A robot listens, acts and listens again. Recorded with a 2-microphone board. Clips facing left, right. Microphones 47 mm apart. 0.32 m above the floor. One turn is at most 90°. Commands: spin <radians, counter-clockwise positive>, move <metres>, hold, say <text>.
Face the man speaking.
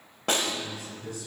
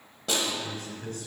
spin -0.87
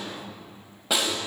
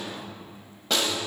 spin -0.17
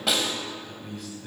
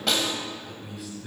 say Facing the man speaking.